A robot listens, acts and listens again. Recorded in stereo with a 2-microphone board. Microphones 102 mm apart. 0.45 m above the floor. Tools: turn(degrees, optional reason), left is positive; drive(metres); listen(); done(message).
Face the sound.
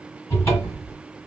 turn(degrees=25, reason="The cupboard door: about 25° left or 155° left.")
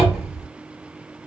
done("Found it: a cupboard door, straight ahead.")